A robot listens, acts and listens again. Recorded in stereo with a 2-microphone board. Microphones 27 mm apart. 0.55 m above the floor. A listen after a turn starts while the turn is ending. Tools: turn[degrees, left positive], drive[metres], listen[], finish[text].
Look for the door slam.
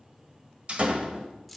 Thought: The door slam: about 40° right or 140° right.
Action: turn[-40]
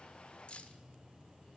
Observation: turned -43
Action: listen[]
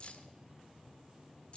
Action: finish[I heard a door slam, but can't make it out now. It was about 5° left or 95° right.]